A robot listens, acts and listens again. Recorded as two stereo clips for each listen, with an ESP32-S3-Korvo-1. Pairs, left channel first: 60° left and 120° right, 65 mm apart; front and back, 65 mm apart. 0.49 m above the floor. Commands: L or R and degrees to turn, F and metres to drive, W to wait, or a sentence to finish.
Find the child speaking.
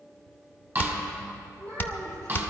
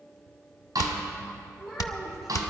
R90
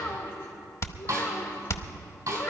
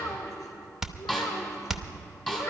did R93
L25
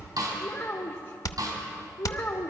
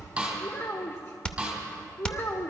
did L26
L25
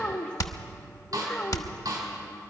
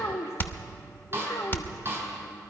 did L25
Found it: a child speaking, straight ahead.